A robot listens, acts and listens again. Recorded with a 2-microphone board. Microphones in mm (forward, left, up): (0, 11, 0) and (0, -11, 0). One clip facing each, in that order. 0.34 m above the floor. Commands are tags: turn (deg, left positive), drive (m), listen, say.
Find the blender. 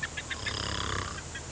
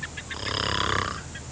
<listen/>
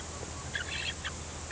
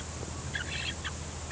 <listen/>
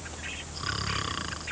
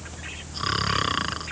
<say>I can't make out a blender to turn to.</say>